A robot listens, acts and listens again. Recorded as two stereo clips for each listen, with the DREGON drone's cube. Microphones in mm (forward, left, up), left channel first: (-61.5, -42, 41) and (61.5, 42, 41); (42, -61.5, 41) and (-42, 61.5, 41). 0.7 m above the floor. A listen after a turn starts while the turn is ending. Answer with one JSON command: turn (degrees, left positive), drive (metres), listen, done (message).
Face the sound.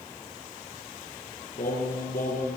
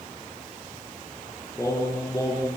{"turn": -125}
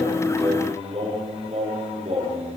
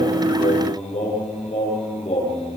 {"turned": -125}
{"turn": -10}
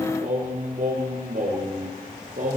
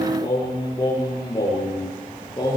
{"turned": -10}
{"done": "Facing the singing."}